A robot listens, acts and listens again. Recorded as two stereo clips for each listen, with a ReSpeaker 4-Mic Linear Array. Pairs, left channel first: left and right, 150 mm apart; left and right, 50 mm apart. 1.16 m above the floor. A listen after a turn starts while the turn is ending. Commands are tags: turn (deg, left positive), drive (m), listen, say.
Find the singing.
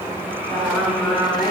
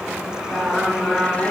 <turn deg="-30"/>
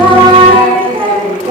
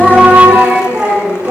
<turn deg="-140"/>
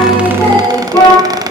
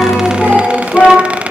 <turn deg="20"/>
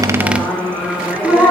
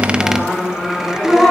<turn deg="10"/>
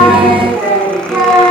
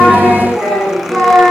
<say>Facing the singing.</say>